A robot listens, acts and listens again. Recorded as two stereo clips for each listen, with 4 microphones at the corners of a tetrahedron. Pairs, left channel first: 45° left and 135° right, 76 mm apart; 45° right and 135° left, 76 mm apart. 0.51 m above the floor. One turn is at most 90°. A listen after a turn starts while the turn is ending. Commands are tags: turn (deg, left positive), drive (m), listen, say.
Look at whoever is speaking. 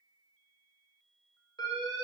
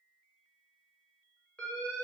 <listen/>
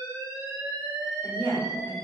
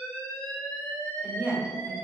<turn deg="75"/>
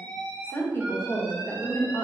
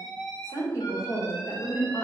<turn deg="-10"/>
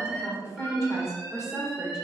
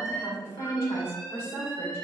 <say>Found it: a woman speaking, straight ahead, 1 to 2 m away.</say>